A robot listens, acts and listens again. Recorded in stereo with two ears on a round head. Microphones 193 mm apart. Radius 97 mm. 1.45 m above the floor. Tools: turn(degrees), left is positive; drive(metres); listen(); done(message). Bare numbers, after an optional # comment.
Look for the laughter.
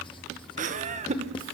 # The laughter: about 30° right or 150° right.
turn(-30)
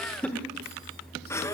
# So it is at 15° left.
turn(15)
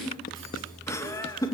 # The laughter is now 15° left.
turn(15)
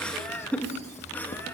# The laughter is now 10° left.
turn(10)
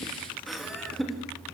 done("Facing the laughter, 2 to 4 m away.")